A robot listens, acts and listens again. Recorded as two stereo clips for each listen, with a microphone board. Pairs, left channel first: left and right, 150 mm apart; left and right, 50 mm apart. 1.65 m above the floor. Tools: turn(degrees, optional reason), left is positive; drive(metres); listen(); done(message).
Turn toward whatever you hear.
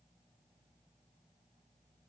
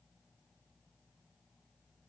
listen()
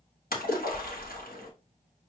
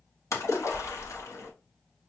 turn(degrees=90)
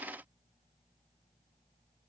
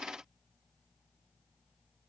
done("Facing where the splash came from. I can't hear it now.")